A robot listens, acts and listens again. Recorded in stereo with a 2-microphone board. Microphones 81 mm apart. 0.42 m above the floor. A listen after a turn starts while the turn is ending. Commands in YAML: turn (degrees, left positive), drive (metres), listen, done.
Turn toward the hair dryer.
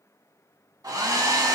turn: -45
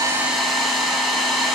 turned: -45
done: "Facing the hair dryer."